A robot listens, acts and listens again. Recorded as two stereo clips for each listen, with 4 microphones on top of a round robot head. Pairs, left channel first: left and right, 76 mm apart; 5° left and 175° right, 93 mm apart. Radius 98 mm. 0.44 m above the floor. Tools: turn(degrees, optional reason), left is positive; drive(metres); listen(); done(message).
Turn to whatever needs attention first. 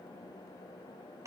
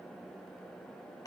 listen()
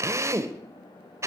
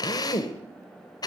listen()
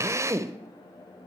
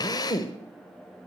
done("I can't make out anything urgent to turn to.")